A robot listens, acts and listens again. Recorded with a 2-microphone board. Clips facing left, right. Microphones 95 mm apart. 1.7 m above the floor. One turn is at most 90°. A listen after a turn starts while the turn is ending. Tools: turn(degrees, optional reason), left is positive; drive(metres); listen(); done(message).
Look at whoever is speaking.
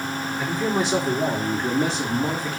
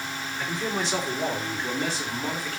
turn(degrees=20, reason="The man speaking: about 20° left or 160° left.")
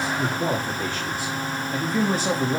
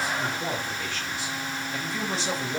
turn(degrees=90, reason="So it is at 135° left.")
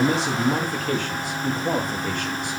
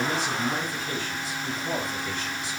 turn(degrees=60, reason="The man speaking is now 60° left.")
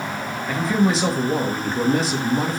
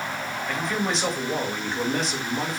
done("Facing the man speaking, 2 to 4 m away.")